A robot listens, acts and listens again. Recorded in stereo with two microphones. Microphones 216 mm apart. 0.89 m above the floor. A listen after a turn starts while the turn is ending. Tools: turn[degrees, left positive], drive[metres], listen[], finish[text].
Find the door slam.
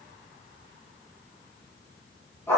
Action: listen[]
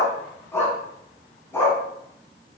Action: listen[]
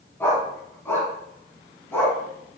Action: finish[I can't make out a door slam, only a dog barking.]